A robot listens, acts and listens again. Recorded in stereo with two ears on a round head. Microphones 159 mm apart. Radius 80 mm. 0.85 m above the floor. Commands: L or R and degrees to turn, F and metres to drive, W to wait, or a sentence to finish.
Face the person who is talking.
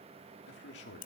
L70
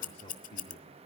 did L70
L35
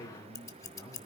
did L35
L15
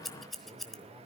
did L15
Found it: a man speaking, straight ahead.